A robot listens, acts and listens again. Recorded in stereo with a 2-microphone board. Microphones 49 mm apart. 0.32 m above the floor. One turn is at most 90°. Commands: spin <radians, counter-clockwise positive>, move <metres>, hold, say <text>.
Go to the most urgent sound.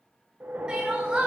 spin -0.35
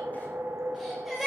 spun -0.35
move 1.0
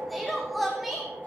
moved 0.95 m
move 1.0
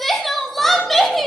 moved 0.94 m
move 1.0
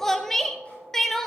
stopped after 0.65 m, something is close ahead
spin 0.17
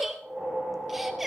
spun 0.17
say I am next to the crying.